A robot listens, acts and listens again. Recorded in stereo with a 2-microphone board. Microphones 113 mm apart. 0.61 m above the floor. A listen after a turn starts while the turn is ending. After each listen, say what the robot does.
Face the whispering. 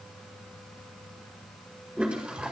Keep listening.
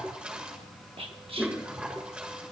Turn 55° right.
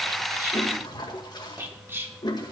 Turn 25° right.
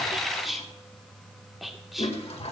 Found it: whispering, straight ahead, 1 to 2 m away.